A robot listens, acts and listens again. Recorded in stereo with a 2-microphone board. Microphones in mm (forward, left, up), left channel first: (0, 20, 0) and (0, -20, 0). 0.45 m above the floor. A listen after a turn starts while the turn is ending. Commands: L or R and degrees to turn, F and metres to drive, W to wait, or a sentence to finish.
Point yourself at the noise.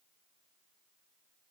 W
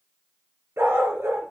R90
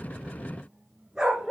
R15
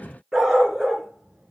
R15
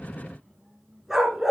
Facing the dog barking.